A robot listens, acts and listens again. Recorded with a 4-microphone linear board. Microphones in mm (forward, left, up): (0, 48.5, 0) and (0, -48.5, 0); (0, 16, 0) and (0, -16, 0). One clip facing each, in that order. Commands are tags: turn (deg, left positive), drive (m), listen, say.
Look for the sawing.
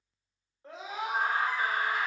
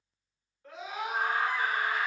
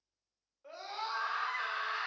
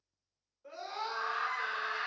<listen/>
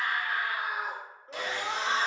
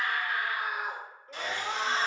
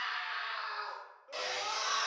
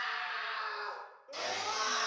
<turn deg="90"/>
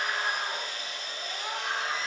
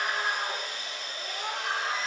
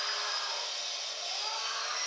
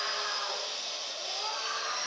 <say>Found it: sawing, straight ahead.</say>